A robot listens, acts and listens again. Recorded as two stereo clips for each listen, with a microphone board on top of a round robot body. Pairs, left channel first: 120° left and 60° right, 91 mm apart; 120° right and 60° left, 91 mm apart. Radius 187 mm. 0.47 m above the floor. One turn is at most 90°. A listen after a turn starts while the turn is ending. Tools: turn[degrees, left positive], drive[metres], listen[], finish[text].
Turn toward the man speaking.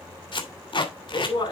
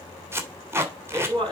Thought: The man speaking: 85° left.
Action: turn[85]
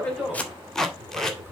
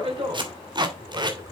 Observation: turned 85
Action: listen[]
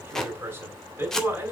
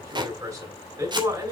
Action: finish[Found it: a man speaking, straight ahead, over 4 m away.]